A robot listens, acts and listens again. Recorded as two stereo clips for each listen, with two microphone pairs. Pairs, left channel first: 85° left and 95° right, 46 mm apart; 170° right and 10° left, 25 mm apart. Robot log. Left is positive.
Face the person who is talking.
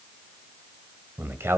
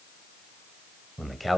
note: The man speaking: 80° right.
cmd yaw -80
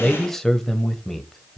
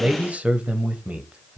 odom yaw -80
note: The man speaking is now 10° left.
cmd yaw +10
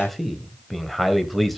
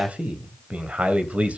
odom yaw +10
end: Facing the man speaking, 1 to 2 m away.